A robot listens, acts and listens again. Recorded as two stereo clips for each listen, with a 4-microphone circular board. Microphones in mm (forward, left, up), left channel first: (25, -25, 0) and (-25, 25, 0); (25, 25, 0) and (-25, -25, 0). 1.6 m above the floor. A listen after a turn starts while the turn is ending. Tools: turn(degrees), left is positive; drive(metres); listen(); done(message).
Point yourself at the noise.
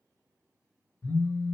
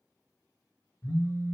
done("Facing the phone buzzing.")